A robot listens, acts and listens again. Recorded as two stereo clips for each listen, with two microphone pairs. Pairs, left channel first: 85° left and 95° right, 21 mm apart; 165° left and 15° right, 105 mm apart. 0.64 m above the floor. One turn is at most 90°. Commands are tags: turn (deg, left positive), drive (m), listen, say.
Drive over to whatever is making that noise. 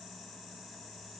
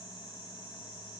<listen/>
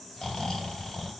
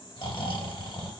<turn deg="90"/>
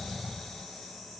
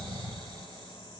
<turn deg="25"/>
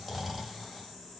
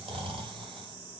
<turn deg="-10"/>
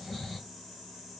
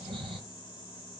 <drive m="1.0"/>
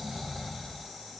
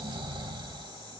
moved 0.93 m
<drive m="1.0"/>
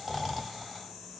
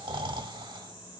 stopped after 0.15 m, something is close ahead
<say>Arrived at the snoring, straight ahead.</say>